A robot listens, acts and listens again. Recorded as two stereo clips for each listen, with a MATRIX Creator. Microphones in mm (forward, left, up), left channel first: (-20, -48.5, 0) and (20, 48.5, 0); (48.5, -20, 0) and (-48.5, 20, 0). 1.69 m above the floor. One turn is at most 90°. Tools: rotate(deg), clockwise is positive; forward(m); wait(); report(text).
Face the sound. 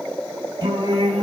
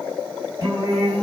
rotate(-90)
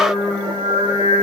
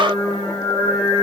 rotate(-35)
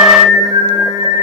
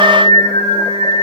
rotate(-20)
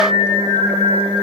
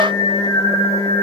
rotate(-10)
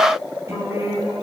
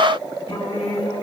report("Found it: singing, straight ahead.")